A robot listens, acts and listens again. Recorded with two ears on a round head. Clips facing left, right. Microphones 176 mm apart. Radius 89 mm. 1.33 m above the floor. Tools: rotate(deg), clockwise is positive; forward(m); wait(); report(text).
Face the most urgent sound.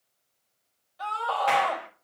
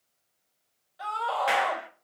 rotate(30)
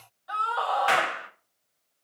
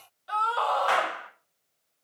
rotate(145)
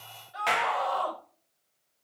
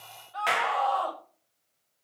rotate(-15)
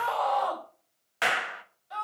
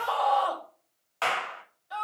report("Facing the scream, over 4 m away.")